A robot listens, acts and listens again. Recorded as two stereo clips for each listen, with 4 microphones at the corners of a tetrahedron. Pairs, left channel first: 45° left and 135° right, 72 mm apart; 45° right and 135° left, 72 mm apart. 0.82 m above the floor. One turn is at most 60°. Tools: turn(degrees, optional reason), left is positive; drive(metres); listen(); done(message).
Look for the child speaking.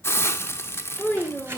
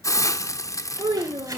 turn(degrees=60, reason="The child speaking: 115° left.")
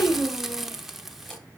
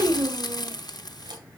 turn(degrees=60, reason="The child speaking is now 85° left.")
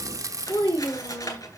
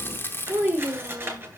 turn(degrees=60, reason="The child speaking is now 70° left.")
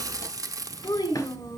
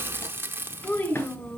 turn(degrees=15, reason="The child speaking is now 15° left.")
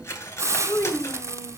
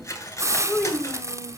done("Facing the child speaking, 1 to 2 m away.")